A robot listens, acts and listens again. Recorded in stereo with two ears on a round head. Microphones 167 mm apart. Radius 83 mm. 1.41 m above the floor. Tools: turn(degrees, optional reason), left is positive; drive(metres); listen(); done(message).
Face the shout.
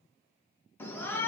turn(degrees=30)
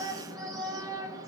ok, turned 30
turn(degrees=-20, reason="So it is at 20° right.")
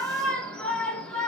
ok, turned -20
done("Facing the shout, 1 to 2 m away.")